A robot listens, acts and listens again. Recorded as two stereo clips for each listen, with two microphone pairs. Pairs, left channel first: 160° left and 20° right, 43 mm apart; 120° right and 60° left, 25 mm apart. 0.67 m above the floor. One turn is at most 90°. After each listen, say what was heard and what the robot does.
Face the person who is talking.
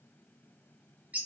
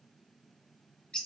Keep listening.
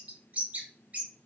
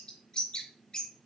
Keep listening.
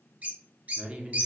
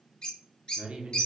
The man speaking: 35° left. Turn 35° left.
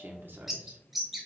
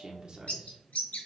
Found it: a man speaking, straight ahead.